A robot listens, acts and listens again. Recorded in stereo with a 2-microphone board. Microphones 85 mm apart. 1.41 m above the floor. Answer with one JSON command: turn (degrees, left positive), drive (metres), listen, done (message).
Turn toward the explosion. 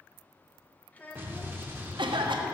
{"turn": -25}
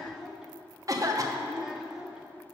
{"listen": true}
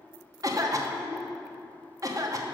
{"done": "I heard an explosion, but can't make it out now. It was about straight ahead or 130° right."}